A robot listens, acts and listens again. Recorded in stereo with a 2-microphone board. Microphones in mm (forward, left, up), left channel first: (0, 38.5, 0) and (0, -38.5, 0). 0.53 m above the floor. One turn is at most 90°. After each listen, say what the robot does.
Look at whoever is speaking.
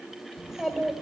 Turn 30° right.
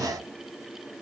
Keep listening.
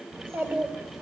Turn 90° right.
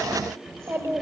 Turn 45° right.
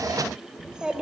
Turn 10° right.
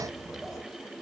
Facing the child speaking, 1 to 2 m away.